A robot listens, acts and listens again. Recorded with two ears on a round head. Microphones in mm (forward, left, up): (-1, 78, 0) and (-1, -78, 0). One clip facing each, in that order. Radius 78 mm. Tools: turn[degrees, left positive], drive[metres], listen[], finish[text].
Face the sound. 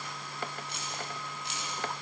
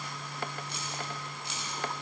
Thought: The keys jangling: about 75° right or 105° right.
Action: turn[-75]
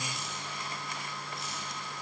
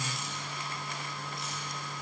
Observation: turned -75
Action: listen[]
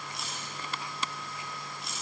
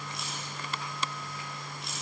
Action: finish[Facing the keys jangling, over 4 m away.]